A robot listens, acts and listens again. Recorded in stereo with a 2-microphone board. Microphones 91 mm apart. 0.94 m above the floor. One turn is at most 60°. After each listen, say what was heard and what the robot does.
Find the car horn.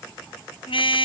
Turn 60° left.
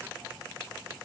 Nothing new. It was at 30° left. Turn 30° left.
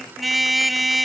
Found it: a car horn, straight ahead.